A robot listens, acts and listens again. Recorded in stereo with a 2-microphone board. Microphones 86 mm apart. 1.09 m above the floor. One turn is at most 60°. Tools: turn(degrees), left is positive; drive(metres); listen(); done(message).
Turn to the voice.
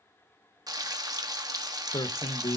turn(degrees=55)
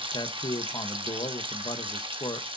turn(degrees=60)
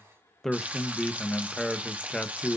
done("Found it: a man speaking, straight ahead, 1 to 2 m away.")